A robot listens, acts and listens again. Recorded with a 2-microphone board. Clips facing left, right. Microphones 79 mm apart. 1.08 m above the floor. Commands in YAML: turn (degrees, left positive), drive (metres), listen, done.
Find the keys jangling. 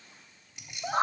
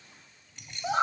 turn: 30
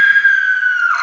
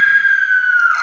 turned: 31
listen: true
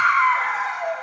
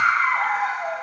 listen: true
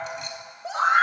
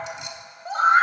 done: "I heard keys jangling, but can't make it out now. It was about 20° right or 135° left."